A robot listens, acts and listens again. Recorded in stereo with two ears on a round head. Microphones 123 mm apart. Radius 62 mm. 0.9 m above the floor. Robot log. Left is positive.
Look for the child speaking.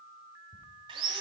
cmd idle
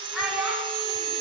cmd yaw -30
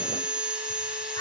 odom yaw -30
cmd idle
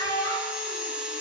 note: So it is at 30° left.
cmd yaw +30
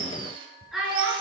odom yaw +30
end: Found it: a child speaking, straight ahead.